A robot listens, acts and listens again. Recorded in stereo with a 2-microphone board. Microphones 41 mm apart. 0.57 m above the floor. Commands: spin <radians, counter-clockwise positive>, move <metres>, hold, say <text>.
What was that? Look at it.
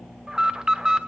spin -0.26
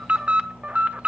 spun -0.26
spin -2.62
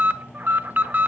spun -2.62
spin -0.96
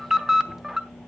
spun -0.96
spin -0.17
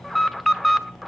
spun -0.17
say Found it: an alarm, straight ahead.